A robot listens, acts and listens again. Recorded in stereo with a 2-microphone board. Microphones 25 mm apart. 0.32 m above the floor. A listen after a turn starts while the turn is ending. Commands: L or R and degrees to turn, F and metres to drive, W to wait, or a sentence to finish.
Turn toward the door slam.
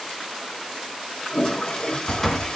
L30
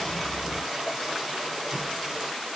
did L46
W
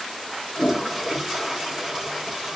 I heard a door slam, but can't make it out now. It was about 35° right or 120° left.